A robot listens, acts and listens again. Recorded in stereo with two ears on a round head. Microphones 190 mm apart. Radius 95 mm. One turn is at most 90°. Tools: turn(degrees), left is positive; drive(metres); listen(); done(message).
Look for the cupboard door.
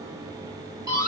listen()
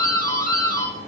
listen()
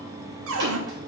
turn(degrees=-65)
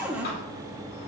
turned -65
done("Facing the cupboard door.")